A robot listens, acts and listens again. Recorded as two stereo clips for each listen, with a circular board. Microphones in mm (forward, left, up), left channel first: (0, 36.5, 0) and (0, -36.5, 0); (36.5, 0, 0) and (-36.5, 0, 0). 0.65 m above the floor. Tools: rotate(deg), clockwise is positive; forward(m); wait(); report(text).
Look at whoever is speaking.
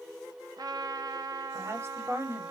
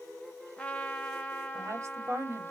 rotate(140)
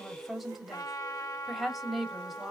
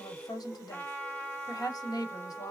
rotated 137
report("Facing the woman speaking, 1 to 2 m away.")